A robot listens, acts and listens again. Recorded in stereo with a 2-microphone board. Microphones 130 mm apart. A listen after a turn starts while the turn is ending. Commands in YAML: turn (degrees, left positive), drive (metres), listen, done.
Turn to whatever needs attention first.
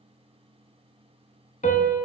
listen: true
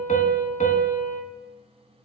listen: true
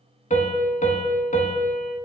done: "I can't make out anything urgent to turn to."